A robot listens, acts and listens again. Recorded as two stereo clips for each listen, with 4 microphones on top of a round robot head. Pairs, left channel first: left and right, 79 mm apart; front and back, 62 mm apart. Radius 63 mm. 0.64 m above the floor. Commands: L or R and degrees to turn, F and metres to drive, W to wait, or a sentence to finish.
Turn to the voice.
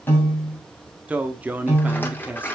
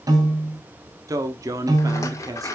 R160
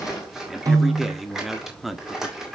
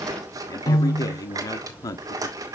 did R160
Facing the man speaking, 1 to 2 m away.